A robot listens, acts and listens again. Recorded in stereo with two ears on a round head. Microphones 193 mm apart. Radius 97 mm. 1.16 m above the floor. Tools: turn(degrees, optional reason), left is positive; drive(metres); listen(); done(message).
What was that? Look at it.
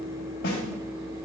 turn(degrees=60, reason="The snare drum: about 60° left or 120° left.")
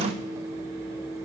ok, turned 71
listen()
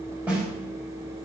turn(degrees=-10, reason="So it is at 10° right.")
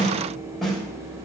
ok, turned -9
done("Facing the snare drum, 2 to 4 m away.")